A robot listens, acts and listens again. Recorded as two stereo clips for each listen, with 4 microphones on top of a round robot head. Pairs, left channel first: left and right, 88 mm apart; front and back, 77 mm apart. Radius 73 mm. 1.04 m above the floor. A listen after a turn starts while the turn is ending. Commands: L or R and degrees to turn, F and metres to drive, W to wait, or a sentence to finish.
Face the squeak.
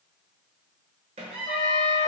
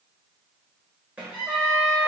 R100
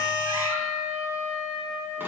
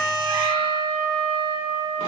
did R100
W
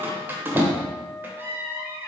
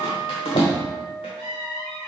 R25
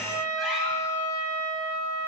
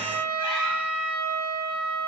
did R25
W
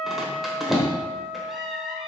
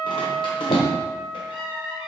Facing the squeak.